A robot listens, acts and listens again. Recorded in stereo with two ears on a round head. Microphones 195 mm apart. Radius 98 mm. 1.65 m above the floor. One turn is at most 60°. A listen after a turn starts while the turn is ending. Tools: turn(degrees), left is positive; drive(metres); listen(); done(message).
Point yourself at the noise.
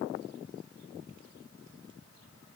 listen()
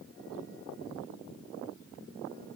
listen()
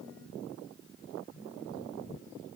done("I can't make out anything to turn to.")